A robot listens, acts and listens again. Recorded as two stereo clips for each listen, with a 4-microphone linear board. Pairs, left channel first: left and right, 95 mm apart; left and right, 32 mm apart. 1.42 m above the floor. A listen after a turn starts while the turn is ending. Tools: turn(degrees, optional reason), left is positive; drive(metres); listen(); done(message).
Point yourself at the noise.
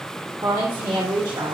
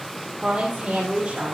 turn(degrees=-60, reason="The woman speaking: about 60° right or 120° right.")
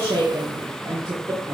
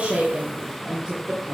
turn(degrees=-30, reason="So it is at 30° right.")
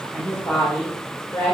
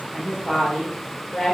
turn(degrees=30, reason="The woman speaking is now 30° left.")
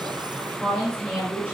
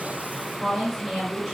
done("Found it: a woman speaking, straight ahead, 2 to 4 m away.")